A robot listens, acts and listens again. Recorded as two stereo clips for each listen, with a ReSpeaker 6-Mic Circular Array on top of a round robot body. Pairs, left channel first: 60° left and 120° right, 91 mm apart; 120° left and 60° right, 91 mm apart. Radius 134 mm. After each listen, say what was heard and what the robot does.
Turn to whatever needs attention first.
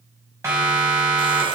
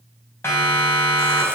The siren: 175° right. Turn 175° right.
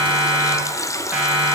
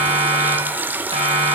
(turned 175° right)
The siren is now 45° right. Turn 45° right.
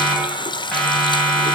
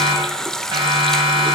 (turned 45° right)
The siren is now 20° right. Turn 20° right.
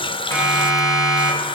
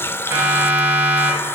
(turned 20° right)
Found it: a siren, straight ahead.